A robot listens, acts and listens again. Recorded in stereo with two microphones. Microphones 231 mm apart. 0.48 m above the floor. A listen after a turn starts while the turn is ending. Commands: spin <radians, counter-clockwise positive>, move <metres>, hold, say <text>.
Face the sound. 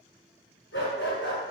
spin 0.87
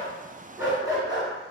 spin -0.35
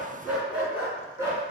spin -0.26
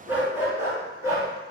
spin -0.26
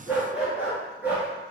say Facing the dog barking, 2 to 4 m away.